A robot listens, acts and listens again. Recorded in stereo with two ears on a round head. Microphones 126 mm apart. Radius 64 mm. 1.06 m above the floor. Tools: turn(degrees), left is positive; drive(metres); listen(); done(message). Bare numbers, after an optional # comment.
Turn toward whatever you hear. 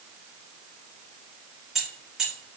turn(-30)
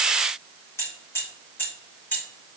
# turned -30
# So it is at 15° left.
turn(15)
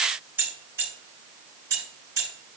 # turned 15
# The keys jangling is now 20° right.
turn(-20)
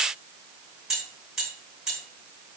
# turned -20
done("Facing the keys jangling, 2 to 4 m away.")